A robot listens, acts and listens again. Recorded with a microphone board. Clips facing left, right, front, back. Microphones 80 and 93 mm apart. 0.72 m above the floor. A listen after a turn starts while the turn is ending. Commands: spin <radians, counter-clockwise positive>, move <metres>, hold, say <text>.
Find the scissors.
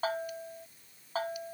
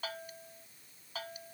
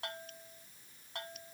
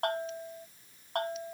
hold
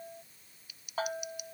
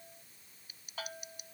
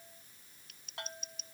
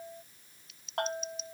spin -0.61
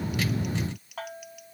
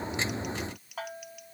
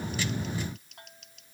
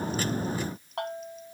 say Found it: scissors, straight ahead.